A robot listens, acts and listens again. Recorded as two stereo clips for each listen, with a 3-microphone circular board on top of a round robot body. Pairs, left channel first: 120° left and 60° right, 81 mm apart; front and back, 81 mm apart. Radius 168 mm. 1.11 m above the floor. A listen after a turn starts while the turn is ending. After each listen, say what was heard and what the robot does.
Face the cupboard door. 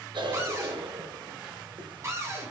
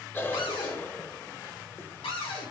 Found it: a cupboard door, straight ahead.